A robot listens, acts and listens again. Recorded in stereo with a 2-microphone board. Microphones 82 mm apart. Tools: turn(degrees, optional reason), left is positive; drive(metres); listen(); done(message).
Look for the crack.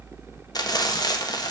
listen()
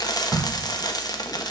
turn(degrees=-30)
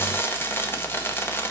listen()
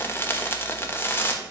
done("I heard a crack, but can't make it out now. It was about 20° left or 140° right.")